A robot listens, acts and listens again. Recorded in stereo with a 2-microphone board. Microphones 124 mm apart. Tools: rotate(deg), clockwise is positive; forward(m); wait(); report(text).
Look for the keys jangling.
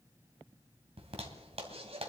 wait()
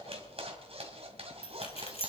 rotate(-55)
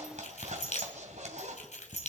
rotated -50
rotate(-75)
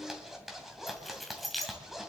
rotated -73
report("Found it: keys jangling, straight ahead, 2 to 4 m away.")